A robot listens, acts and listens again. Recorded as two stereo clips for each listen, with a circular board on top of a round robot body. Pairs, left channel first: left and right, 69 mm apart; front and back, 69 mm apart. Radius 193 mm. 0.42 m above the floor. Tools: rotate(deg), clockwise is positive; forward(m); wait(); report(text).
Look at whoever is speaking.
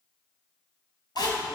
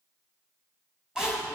rotate(70)
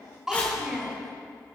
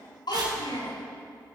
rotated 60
rotate(10)
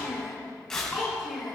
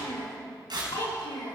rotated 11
report("Facing the child speaking.")